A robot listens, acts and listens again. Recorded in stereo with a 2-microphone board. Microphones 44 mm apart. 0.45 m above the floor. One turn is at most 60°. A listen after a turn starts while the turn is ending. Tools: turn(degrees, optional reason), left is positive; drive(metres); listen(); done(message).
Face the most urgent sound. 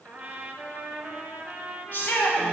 turn(degrees=40, reason="The shout: about 40° left or 140° left.")
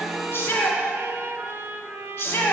turn(degrees=60, reason="So it is at 100° left.")
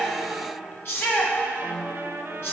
turn(degrees=60, reason="The shout is now 65° left.")
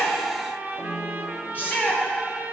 turn(degrees=45, reason="The shout is now 45° left.")
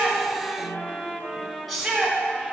done("Found it: a shout, straight ahead.")